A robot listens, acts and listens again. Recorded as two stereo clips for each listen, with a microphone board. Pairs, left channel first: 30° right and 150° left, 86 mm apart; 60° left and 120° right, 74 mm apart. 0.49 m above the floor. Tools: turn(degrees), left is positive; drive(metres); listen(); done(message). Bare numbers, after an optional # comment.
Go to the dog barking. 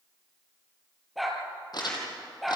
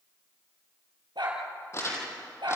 # The dog barking: 120° right.
turn(-120)
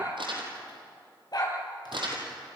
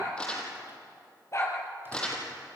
# The dog barking is now 10° left.
turn(10)
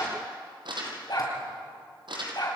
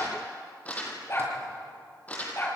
drive(1.0)
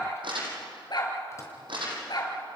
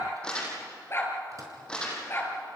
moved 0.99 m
drive(1.0)
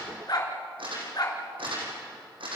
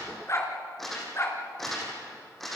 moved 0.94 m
# The dog barking is now 10° left.
turn(10)
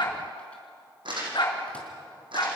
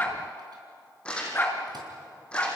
drive(1.0)
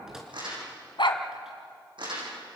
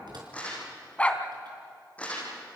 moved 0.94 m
# The dog barking is now 15° right.
turn(-15)
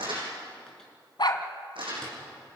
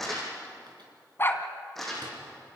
drive(1.0)
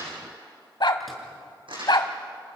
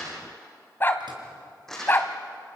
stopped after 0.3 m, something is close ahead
done("Arrived at the dog barking, straight ahead.")